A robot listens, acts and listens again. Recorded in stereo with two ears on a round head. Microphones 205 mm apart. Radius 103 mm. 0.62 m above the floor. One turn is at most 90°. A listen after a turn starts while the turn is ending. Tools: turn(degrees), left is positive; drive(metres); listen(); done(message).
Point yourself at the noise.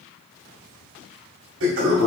turn(degrees=-60)
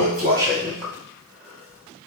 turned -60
done("Facing the toilet flushing.")